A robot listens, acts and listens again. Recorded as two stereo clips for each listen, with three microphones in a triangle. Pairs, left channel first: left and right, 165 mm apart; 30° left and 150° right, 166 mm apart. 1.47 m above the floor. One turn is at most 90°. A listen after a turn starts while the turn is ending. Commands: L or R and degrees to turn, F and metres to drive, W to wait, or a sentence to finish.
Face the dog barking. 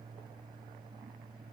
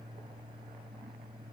W
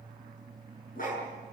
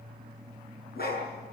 L55
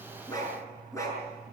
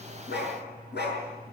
L20
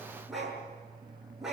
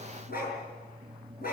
Facing the dog barking, over 4 m away.